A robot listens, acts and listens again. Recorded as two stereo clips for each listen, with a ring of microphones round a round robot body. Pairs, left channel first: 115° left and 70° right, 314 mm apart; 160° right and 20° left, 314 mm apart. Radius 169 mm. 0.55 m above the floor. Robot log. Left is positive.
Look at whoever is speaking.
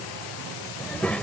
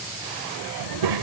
note: The child speaking: 25° left.
cmd yaw +25
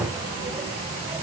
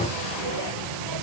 note: The child speaking is now 10° left.
cmd yaw +10
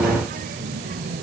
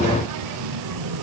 end: Facing the child speaking.